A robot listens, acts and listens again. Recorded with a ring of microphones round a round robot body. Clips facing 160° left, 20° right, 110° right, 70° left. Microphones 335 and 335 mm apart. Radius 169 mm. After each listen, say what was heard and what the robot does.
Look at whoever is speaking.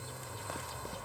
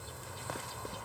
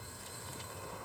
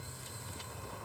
Keep listening.
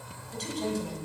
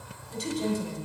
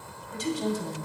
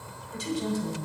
The woman speaking: 100° right. Turn 100° right.
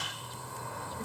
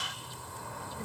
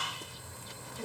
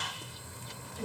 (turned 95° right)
Keep listening.
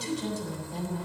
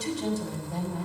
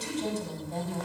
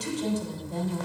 Found it: a woman speaking, straight ahead, 2 to 4 m away.